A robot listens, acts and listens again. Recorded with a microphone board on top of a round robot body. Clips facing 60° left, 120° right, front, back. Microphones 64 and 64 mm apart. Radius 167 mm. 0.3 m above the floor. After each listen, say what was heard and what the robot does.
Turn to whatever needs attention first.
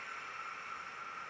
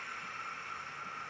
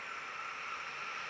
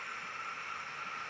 Keep listening.
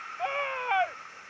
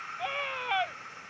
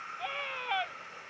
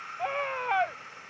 The scream: 130° left. Turn 130° left.
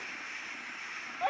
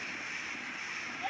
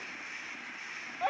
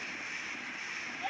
The scream is now 30° left. Turn 30° left.
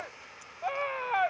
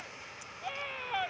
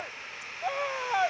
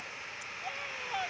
The scream is now 15° left. Turn 15° left.
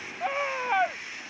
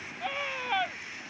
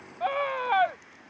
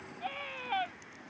Found it: a scream, straight ahead.